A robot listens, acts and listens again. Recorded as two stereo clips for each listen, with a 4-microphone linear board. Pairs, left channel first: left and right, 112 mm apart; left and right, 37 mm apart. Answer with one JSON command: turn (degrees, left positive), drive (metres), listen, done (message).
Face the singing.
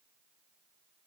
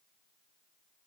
{"listen": true}
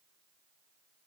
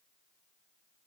{"listen": true}
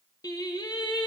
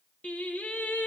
{"turn": 45}
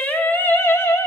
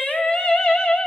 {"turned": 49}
{"turn": 30}
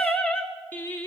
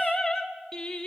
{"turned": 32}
{"turn": 20}
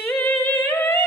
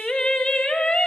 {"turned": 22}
{"turn": 15}
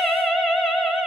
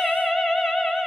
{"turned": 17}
{"done": "Facing the singing."}